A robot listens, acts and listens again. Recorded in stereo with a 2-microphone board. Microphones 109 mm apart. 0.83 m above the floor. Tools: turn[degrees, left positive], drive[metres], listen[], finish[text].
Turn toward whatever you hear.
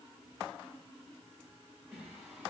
Action: turn[-30]
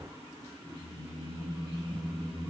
Thought: So it is at 155° right.
Action: turn[-155]
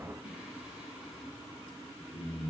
Action: finish[Found it: singing, straight ahead, 2 to 4 m away.]